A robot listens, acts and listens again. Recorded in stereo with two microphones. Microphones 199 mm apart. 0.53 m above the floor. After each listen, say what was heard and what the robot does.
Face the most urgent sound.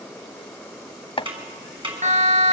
The siren: about 35° right or 145° right. Turn 35° right.
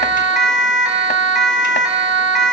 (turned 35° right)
Found it: a siren, straight ahead, over 4 m away.